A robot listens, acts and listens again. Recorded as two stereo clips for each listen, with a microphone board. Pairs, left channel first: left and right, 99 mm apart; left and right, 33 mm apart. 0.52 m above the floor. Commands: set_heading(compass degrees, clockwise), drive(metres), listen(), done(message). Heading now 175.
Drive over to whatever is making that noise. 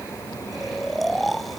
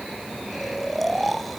set_heading(145)
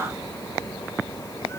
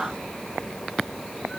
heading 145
listen()
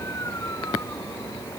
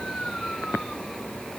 listen()
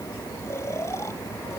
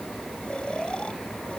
done("I heard snoring, but can't make it out now. It was about 30° right or 150° left. I did not reach it.")